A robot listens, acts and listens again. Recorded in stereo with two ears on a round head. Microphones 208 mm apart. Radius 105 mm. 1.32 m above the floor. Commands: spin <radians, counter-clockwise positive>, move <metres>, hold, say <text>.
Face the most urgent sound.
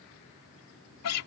hold
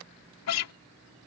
hold
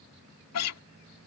say I can't make out anything urgent, only a guitar.